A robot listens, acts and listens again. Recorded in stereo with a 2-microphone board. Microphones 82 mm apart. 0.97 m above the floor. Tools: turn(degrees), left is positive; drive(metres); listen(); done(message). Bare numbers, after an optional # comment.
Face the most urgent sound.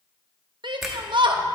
# The shout: about 70° right or 110° right.
turn(-70)
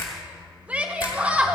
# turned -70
# So it is at 15° right.
turn(-15)
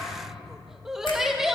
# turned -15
done("Facing the shout, under 1 m away.")